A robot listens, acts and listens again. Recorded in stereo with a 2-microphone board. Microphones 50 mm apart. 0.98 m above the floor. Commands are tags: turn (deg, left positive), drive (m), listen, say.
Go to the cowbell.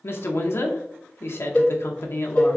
<turn deg="20"/>
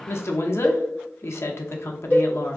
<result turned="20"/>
<turn deg="140"/>
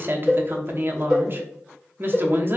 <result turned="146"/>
<drive m="1.0"/>
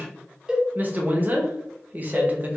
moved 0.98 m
<turn deg="-15"/>
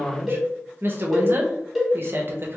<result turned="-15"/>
<drive m="1.0"/>
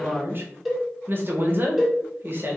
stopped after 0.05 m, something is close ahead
<say>I am next to the cowbell.</say>